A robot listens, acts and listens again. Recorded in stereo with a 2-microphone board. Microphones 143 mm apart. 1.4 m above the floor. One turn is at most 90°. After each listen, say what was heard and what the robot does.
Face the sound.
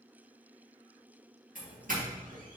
The doorbell: about 70° right or 110° right. Turn 70° right.
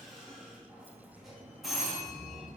Found it: a doorbell, straight ahead.